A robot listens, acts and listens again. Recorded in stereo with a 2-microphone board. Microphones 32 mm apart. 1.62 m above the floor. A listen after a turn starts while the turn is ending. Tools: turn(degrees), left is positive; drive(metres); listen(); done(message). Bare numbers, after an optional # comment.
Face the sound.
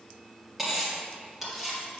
turn(-30)
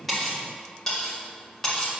# So it is at 20° left.
turn(20)
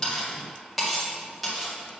done("Found it: cutlery clinking, straight ahead.")